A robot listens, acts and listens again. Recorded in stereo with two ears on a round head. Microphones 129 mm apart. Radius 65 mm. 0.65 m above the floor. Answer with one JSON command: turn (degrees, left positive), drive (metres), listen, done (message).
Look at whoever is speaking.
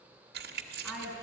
{"turn": -30}
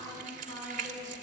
{"turn": 30}
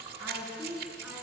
{"turn": -15}
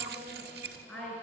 {"done": "Found it: a woman speaking, straight ahead."}